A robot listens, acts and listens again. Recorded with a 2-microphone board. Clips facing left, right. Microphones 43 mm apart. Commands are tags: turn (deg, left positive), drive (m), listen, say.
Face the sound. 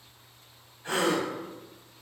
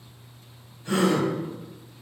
<turn deg="50"/>
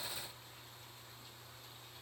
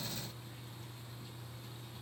<listen/>
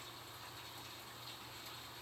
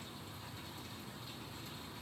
<say>I heard a gasp, but can't make it out now. It was about straight ahead or 80° left.</say>